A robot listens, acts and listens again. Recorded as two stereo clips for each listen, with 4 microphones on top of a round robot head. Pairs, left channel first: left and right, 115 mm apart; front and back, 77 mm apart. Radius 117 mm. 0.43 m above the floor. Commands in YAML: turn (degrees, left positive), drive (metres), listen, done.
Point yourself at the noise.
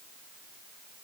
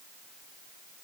listen: true
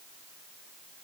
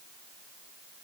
listen: true
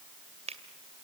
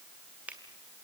turn: -110
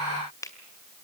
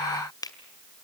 turn: 25
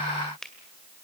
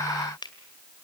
done: "Found it: a finger snap, straight ahead."